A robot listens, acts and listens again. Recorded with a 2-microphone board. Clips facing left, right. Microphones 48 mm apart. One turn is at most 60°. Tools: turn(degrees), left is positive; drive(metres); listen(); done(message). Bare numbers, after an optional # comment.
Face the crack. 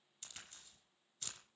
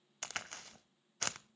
# The crack: about 70° right or 110° right.
turn(-60)
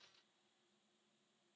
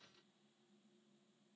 listen()
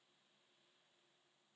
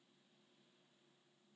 done("I heard a crack, but can't make it out now. It was about 10° right or 50° right.")